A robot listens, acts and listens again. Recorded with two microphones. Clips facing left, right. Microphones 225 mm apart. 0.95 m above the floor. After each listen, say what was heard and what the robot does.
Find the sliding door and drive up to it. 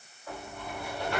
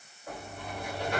The sliding door: about 15° right or 165° right. Turn 15° right.
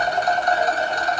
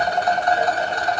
Keep listening.
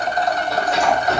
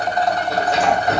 So it is at 145° right. Turn 145° right.
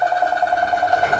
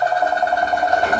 Drive 1.0 m forward.
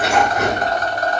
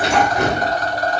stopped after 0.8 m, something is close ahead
Arrived at the sliding door, straight ahead.